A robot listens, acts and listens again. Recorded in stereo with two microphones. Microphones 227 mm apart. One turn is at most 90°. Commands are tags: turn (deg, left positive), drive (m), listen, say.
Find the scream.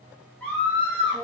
<turn deg="30"/>
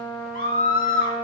<turn deg="90"/>
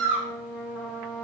<turn deg="60"/>
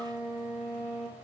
<listen/>
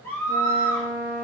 <turn deg="10"/>
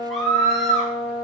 <say>Facing the scream, 2 to 4 m away.</say>